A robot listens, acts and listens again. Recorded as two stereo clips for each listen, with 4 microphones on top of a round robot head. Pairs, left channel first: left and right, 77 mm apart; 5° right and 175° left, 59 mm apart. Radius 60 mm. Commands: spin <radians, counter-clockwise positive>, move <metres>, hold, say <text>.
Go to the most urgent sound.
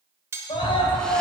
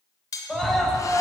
spin 1.40
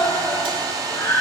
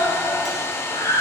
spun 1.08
spin 0.35
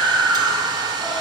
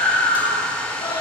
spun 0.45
move 1.0
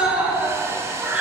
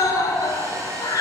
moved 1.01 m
spin -0.26
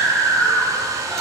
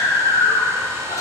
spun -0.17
move 1.0
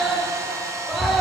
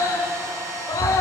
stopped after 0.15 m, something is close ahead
say Arrived at the scream, straight ahead.